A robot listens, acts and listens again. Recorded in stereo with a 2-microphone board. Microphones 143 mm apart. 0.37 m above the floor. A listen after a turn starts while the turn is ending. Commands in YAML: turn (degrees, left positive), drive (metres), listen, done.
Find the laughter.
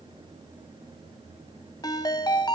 listen: true
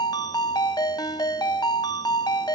listen: true
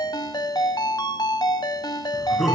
turn: 30
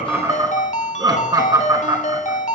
turn: -30
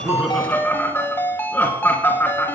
turn: 15
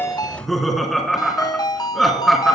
done: "Facing the laughter."